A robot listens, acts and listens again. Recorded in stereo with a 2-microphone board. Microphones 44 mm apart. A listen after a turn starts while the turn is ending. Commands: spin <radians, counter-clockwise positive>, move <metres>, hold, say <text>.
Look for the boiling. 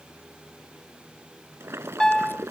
spin -1.57
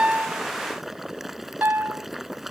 say Facing the boiling.